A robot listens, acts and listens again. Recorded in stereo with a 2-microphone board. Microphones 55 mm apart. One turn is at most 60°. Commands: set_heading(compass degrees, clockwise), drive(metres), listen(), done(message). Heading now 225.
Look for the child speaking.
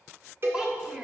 set_heading(240)
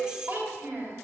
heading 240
set_heading(280)
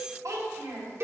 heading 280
set_heading(340)
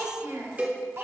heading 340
set_heading(30)
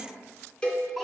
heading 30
listen()
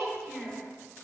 done("Found it: a child speaking, straight ahead.")